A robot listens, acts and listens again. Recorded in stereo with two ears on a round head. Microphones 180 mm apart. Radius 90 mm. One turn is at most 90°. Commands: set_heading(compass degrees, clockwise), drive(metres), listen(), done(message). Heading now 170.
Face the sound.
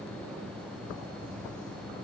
listen()
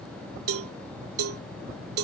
set_heading(260)
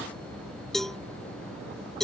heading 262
done("Found it: a cowbell, straight ahead.")